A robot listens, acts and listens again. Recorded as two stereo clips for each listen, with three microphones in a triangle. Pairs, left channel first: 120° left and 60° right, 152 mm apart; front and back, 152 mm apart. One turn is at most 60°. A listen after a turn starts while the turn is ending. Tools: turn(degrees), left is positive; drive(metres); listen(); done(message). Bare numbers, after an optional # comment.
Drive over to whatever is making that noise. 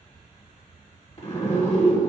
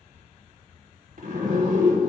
# The zipper: 160° left.
turn(60)
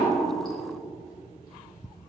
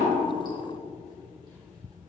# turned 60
# Nothing new. It was at 100° left.
turn(60)
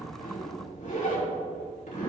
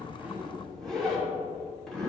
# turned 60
# The zipper is now 85° left.
turn(60)
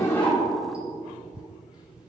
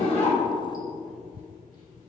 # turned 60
# Nothing new. It was at 25° left.
turn(25)
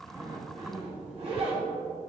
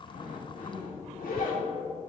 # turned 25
# The zipper is now 10° right.
turn(-10)
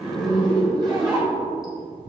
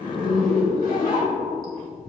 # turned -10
drive(1.0)
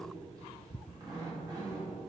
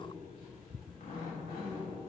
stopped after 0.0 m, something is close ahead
done("Blocked. The zipper is further on, straight ahead.")